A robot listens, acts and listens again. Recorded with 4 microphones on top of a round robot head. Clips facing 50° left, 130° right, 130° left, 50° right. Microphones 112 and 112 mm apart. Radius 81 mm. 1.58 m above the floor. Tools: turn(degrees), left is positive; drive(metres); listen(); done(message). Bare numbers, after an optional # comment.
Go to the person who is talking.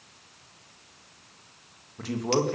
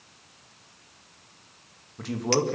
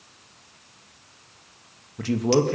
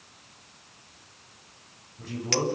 # The man speaking: 135° left.
turn(135)
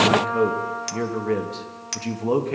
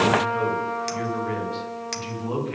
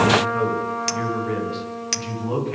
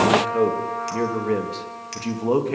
drive(1.0)
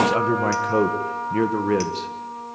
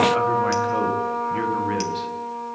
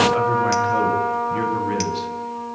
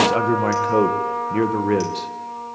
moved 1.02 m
drive(1.0)
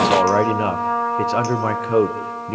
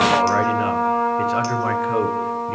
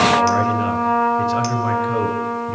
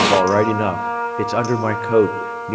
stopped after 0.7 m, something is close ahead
# The man speaking is now 15° right.
turn(-15)
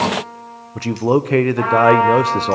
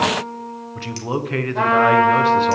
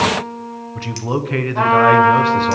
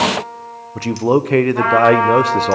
done("I am next to the man speaking.")